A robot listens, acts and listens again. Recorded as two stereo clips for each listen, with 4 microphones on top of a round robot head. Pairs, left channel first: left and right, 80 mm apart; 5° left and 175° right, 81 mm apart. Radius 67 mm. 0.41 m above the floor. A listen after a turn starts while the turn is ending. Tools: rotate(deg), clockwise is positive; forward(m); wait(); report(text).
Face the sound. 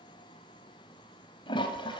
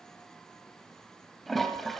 rotate(-90)
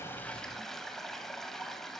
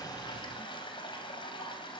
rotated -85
report("Facing the toilet flushing, 2 to 4 m away.")